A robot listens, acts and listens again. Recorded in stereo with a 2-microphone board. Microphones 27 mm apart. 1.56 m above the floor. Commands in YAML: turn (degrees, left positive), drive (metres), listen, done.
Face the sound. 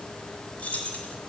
turn: 60
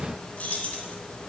turn: 60
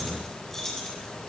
turn: 20
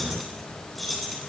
done: "Facing the keys jangling."